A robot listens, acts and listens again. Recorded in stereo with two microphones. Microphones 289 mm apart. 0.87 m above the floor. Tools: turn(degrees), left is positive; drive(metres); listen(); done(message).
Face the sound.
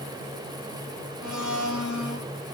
turn(degrees=90)
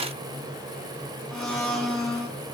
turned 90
done("Facing the blender, 2 to 4 m away.")